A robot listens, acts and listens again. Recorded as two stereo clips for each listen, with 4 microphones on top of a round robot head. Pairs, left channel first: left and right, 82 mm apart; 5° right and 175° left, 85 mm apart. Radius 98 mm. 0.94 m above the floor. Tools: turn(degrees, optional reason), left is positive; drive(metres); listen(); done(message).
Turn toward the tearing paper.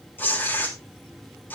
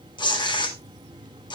turn(degrees=20, reason="The tearing paper: 20° left.")
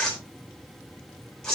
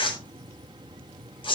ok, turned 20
done("Facing the tearing paper.")